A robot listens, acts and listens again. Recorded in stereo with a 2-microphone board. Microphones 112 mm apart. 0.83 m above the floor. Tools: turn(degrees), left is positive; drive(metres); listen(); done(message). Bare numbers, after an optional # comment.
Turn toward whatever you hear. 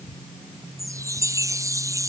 # The chime: about 30° right or 150° right.
turn(-30)
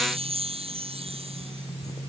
# So it is at 120° right.
turn(-120)
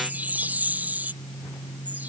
# The chime is now 15° right.
turn(-15)
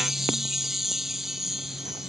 done("Facing the chime.")